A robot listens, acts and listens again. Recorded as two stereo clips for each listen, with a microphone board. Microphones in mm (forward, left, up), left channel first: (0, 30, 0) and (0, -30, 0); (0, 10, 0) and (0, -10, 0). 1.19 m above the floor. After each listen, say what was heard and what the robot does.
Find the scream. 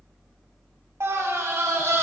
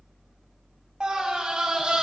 The scream: about 45° right or 135° right. Turn 45° right.
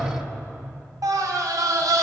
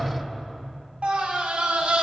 So it is at 85° right. Turn 85° right.
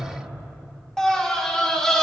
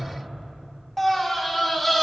The scream is now 10° left. Turn 10° left.
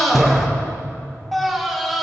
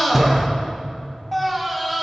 Facing the scream.